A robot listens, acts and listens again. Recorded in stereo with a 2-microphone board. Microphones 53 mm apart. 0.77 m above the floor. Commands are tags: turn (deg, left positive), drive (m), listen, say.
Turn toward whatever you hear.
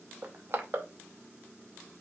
<turn deg="-50"/>
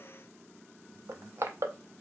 <turn deg="-75"/>
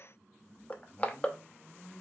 <turn deg="35"/>
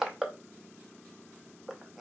<say>Facing the crushing.</say>